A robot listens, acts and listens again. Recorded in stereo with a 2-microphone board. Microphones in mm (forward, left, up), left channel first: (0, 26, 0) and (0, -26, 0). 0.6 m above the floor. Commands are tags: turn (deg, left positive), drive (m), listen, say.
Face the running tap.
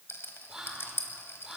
<listen/>
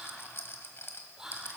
<listen/>
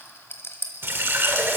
<turn deg="-50"/>
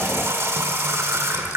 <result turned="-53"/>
<turn deg="-75"/>
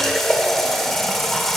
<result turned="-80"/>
<say>Found it: a running tap, straight ahead, 1 to 2 m away.</say>